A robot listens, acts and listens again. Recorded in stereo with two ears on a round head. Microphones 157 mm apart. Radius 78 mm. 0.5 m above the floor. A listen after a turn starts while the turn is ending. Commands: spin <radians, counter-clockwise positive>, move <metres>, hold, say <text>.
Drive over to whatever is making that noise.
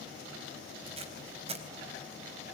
spin -0.61
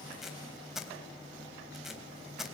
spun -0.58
move 1.0
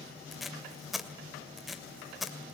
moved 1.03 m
move 1.0
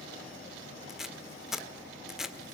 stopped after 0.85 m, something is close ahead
say I am next to the tape being pulled.